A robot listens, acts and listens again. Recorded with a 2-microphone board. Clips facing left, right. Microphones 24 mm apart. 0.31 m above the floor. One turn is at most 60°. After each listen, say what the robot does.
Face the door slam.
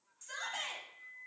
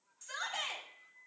Keep listening.
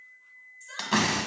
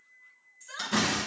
Turn 55° left.
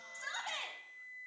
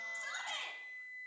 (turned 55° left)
Keep listening.
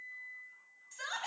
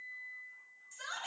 I heard a door slam, but can't make it out now. It was about straight ahead or 70° left.